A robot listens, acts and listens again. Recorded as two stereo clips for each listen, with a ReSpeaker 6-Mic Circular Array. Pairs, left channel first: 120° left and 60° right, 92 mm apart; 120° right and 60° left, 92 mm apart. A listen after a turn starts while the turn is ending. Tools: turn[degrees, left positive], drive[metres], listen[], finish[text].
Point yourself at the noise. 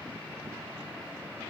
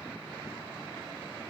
Action: listen[]
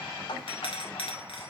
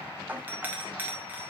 Thought: The doorbell: 130° left.
Action: turn[130]
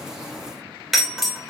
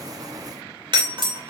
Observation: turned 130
Thought: The doorbell is now 30° left.
Action: turn[30]
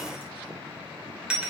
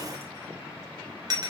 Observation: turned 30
Thought: The doorbell is now 20° left.
Action: turn[20]
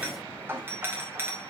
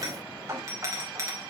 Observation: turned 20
Action: finish[Facing the doorbell, 2 to 4 m away.]